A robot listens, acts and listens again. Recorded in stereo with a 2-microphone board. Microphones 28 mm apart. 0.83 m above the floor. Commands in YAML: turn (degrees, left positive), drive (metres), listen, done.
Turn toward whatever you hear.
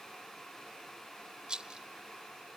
turn: -35
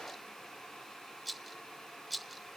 done: "Facing the rattle."